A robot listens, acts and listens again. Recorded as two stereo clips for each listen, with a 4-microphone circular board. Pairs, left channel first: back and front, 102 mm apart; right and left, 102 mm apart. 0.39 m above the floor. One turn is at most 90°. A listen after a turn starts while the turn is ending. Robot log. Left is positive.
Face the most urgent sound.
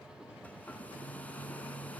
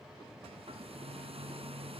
cmd idle
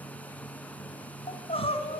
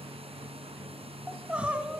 note: The crying: 165° left.
cmd yaw +90
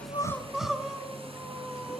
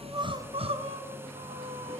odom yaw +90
note: The crying is now 85° left.
cmd yaw +85
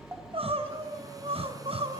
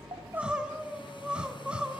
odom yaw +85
note: The crying is now 10° left.
cmd yaw +10
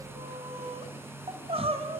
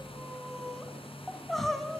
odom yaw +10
end: Facing the crying, 2 to 4 m away.